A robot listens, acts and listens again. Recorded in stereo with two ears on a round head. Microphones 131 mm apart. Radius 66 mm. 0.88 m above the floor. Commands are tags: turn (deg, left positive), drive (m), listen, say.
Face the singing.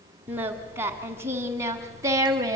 <turn deg="-25"/>
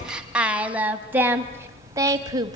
<turn deg="-25"/>
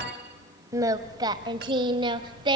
<turn deg="-30"/>
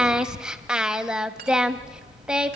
<say>Found it: singing, straight ahead, 1 to 2 m away.</say>